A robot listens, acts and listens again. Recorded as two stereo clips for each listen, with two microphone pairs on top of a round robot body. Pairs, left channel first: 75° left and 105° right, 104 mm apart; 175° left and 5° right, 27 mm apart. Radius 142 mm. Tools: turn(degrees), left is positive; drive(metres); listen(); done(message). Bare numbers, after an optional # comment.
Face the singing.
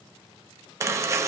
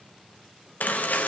listen()
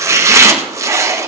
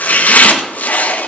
listen()
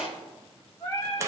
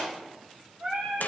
# The singing: 30° left.
turn(30)
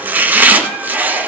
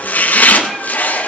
listen()
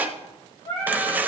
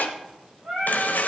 # The singing is now 25° left.
turn(25)
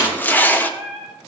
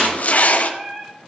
done("Facing the singing, over 4 m away.")